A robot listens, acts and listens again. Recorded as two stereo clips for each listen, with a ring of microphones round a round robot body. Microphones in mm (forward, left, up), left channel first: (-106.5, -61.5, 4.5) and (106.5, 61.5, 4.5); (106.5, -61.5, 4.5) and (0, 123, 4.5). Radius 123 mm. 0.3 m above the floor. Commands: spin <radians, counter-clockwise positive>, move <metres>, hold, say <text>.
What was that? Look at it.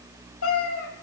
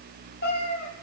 spin -2.01
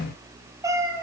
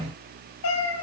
spin -0.87
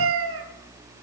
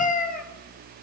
spin -0.17
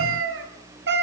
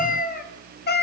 spin -0.35
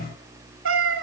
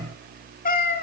spin -0.26
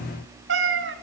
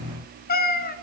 spin -0.26
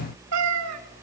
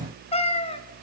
say Found it: a cat meowing, straight ahead, 1 to 2 m away.